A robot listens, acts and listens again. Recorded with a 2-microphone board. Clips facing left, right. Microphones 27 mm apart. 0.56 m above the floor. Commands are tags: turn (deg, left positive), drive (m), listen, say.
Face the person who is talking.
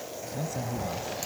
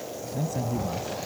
<turn deg="30"/>
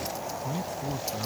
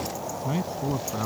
<turn deg="-35"/>
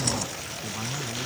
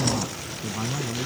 <turn deg="-15"/>
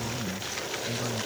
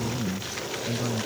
<turn deg="-10"/>
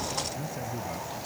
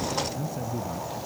<say>Found it: a man speaking, straight ahead.</say>